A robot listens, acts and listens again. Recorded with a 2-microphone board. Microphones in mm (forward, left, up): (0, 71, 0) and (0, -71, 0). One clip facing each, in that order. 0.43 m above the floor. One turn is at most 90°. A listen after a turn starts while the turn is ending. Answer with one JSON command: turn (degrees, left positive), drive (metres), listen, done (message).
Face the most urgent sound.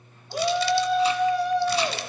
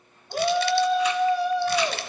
{"turn": 30}
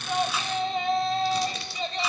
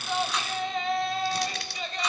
{"turn": 90}
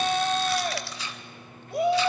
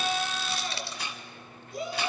{"turn": 90}
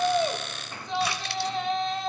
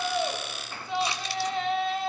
{"done": "Found it: a shout, straight ahead, 2 to 4 m away."}